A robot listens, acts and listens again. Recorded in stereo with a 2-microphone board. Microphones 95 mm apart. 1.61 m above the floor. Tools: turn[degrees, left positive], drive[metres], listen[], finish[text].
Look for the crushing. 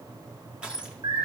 Action: turn[-30]
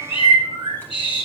Action: listen[]
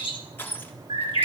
Thought: So it is at 20° left.
Action: turn[20]
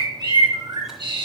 Action: listen[]
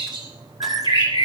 Action: listen[]
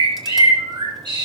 Action: finish[I heard crushing from this way, but can't make it out now.]